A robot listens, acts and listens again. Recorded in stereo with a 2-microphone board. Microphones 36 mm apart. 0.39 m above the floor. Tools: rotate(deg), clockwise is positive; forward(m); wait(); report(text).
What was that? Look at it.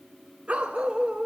rotate(35)
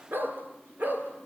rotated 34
rotate(120)
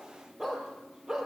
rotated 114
rotate(15)
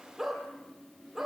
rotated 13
report("Facing the dog barking, over 4 m away.")